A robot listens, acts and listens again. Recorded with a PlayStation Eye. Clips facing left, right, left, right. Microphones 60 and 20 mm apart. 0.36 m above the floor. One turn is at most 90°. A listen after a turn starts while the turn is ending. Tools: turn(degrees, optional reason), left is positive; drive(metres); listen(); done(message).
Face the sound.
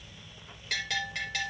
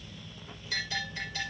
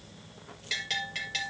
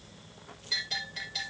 turn(degrees=90)
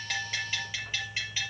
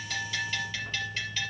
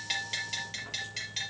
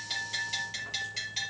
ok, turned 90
turn(degrees=10, reason="So it is at 10° left.")
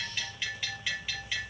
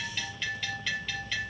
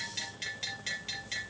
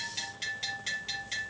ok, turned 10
done("Found it: a bell, straight ahead.")